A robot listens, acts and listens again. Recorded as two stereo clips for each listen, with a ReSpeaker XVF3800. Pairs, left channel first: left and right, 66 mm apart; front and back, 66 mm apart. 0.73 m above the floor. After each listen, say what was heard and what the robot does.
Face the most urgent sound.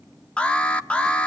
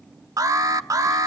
The alarm: 160° left. Turn 160° left.
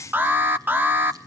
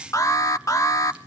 The alarm is now 30° right. Turn 30° right.
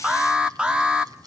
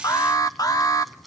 The alarm is now 15° right. Turn 15° right.
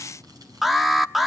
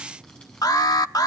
Facing the alarm, under 1 m away.